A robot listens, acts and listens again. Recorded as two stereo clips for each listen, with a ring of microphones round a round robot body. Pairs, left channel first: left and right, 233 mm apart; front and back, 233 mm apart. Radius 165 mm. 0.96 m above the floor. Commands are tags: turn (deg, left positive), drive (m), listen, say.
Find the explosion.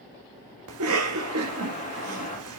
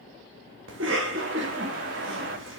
<turn deg="160"/>
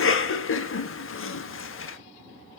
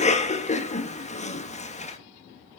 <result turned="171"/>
<turn deg="-10"/>
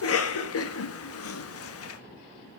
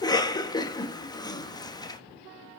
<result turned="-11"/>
<say>I heard an explosion from this way, but can't make it out now.</say>